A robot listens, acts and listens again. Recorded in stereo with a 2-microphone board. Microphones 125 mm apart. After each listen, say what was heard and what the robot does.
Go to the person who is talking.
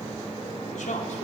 Turn 90° left.
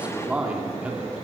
So it is at 10° right. Turn 10° right.
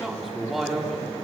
Drive 1.0 m forward.
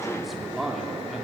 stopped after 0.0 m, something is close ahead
Blocked. The man speaking is further on, straight ahead.